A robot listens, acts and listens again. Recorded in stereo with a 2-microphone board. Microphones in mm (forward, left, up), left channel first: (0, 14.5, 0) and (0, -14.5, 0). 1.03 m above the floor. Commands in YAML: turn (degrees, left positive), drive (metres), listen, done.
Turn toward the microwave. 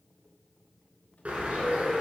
listen: true
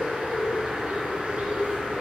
listen: true
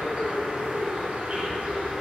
done: "I can't make out a microwave, only a bird."